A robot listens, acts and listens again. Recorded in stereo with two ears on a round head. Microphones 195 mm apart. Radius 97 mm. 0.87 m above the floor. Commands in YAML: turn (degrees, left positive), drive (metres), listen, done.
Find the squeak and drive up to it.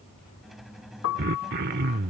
turn: 30
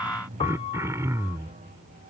turn: -35
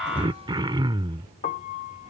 listen: true
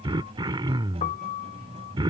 turn: -25
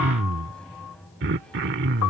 drive: 1.0
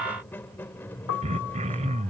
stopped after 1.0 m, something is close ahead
turn: 10
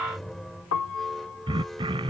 done: "Arrived at the squeak, straight ahead."